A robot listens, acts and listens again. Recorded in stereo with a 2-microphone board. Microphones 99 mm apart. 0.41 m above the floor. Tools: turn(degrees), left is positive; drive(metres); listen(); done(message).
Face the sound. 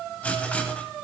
turn(degrees=30)
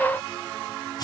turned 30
turn(degrees=135)
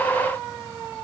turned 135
listen()
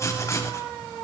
turn(degrees=30)
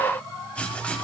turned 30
turn(degrees=15)
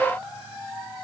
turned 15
listen()
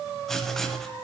done("Facing the writing, 1 to 2 m away.")